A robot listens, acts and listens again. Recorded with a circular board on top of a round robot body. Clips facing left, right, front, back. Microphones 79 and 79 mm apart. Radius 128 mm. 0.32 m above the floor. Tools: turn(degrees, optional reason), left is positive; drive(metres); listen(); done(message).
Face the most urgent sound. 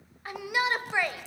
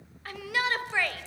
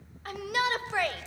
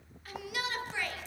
turn(degrees=20, reason="The shout: 20° left.")
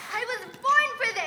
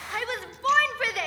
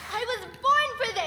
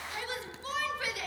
done("Facing the shout, 2 to 4 m away.")